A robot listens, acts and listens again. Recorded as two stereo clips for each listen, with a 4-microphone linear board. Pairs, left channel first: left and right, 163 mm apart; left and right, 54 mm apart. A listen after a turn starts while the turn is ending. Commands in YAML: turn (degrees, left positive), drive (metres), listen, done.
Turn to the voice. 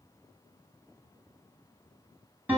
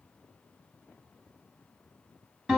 listen: true
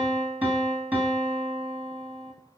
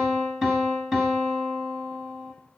listen: true
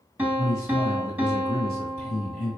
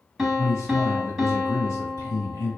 turn: 55
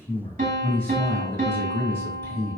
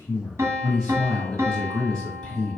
turn: 15
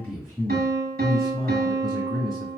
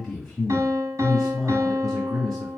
done: "Found it: a man speaking, straight ahead, 1 to 2 m away."